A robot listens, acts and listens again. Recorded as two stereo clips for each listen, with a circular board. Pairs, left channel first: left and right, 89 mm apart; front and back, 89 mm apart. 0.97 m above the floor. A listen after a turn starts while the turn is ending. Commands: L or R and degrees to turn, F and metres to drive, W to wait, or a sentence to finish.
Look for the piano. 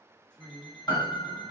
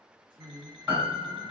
L125
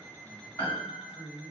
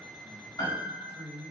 L25
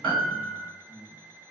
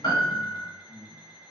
L10
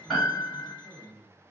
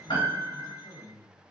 Facing the piano.